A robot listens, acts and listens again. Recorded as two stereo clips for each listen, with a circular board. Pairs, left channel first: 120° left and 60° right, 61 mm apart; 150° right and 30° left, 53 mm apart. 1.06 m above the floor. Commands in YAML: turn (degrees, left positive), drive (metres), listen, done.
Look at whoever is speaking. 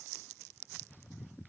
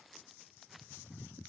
listen: true
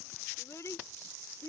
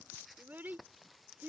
turn: 80
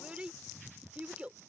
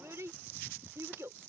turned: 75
turn: 10
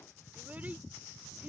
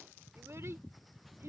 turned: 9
listen: true
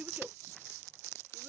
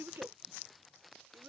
done: "Facing the child speaking."